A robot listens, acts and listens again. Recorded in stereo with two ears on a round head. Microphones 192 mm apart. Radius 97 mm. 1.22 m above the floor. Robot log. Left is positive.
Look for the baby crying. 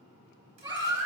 note: The baby crying: about 20° right or 160° right.
cmd yaw -20
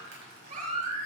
note: So it is at 140° right.
cmd yaw -140
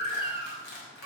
note: The baby crying is now 40° right.
cmd yaw -40
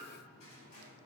cmd idle
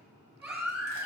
end: Facing the baby crying.